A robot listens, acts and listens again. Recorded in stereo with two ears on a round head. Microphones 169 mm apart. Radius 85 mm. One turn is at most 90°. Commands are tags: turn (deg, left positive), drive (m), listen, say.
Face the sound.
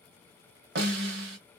<turn deg="-60"/>
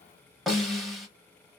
<say>Facing the snare drum.</say>